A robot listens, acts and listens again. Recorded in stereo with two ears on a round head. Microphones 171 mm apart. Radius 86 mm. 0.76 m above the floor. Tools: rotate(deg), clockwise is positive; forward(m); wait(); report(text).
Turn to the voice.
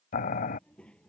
rotate(-30)
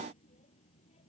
rotate(-145)
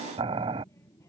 rotate(-15)
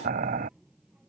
report("Facing the child speaking.")